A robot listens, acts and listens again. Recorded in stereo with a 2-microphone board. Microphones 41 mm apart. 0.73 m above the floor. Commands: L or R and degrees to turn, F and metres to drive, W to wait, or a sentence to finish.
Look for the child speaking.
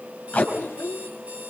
L70
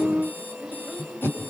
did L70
W
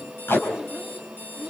W
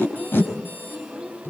R10
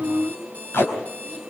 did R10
W
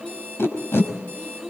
Facing the child speaking, over 4 m away.